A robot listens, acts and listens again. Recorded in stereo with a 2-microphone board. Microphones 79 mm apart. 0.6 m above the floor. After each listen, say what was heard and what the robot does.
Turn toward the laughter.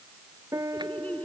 The laughter: about 20° left or 160° left. Turn 20° left.
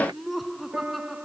Found it: laughter, straight ahead.